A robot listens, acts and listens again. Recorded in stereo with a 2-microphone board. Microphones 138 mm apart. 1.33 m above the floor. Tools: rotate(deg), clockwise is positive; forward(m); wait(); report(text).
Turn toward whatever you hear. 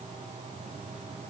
wait()
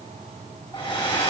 rotate(-35)
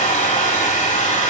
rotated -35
rotate(-110)
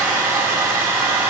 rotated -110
rotate(15)
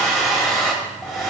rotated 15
report("Found it: a hair dryer, straight ahead, 2 to 4 m away.")